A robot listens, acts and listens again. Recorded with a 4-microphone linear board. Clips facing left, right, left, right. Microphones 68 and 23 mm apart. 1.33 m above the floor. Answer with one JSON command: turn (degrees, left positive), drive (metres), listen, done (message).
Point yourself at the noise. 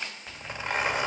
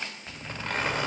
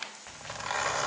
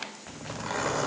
{"turn": 30}
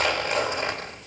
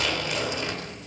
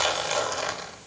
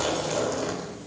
{"turn": 130}
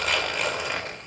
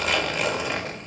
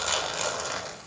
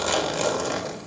{"done": "Found it: a zipper, straight ahead."}